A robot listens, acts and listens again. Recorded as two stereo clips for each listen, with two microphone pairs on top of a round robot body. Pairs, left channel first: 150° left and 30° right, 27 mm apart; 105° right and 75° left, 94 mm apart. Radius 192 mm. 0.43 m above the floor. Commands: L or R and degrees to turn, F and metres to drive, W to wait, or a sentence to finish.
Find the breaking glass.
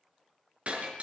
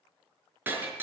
Facing the breaking glass.